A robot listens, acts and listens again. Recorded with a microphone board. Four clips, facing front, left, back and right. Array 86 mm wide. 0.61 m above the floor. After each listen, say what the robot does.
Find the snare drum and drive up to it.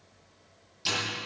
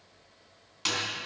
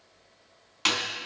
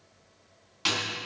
Turn 170° right.
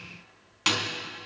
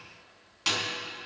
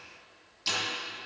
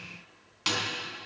Drive 1.0 m forward.
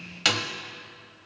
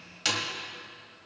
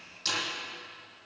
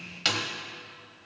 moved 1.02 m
Turn 10° right.
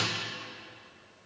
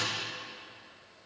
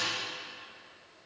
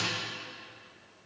Keep listening.
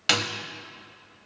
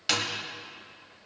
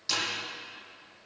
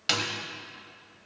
Drive 1.0 m forward.
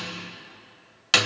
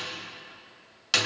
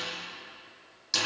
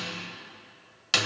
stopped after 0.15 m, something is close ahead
I am next to the snare drum.